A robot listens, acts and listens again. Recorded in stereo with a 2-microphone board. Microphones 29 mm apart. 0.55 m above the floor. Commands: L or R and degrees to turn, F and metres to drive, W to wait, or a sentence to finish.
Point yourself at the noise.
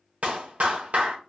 R55
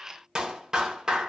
R25
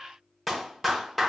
Facing the clap.